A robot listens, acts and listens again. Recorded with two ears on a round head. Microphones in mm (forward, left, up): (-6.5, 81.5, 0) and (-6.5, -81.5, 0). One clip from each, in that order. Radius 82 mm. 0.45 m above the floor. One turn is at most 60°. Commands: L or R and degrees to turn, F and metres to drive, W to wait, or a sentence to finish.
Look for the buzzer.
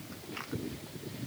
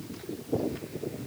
W
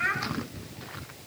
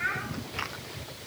W
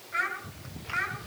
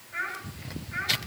I can't make out a buzzer to turn to.